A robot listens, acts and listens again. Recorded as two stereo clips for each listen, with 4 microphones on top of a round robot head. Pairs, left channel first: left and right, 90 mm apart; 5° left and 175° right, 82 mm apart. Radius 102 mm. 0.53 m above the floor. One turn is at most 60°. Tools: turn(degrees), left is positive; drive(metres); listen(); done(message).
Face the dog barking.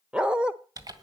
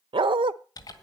turn(degrees=-60)
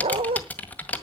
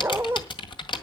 turn(degrees=-60)
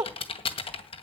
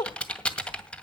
turn(degrees=-45)
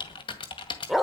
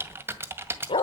done("Facing the dog barking.")